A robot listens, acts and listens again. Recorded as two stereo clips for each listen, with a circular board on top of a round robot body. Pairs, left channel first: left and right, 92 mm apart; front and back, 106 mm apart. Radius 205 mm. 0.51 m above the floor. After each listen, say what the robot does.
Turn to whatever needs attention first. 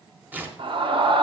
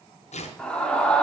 Turn 80° right.
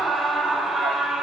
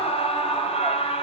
Found it: a scream, straight ahead, 2 to 4 m away.